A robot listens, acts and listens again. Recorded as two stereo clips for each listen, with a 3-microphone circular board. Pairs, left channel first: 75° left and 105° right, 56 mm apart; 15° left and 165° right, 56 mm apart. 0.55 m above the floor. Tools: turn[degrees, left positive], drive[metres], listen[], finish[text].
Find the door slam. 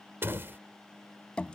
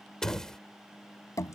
Thought: The door slam: 65° right.
Action: turn[-65]
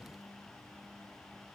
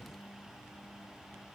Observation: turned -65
Action: finish[I heard a door slam from this way, but can't make it out now.]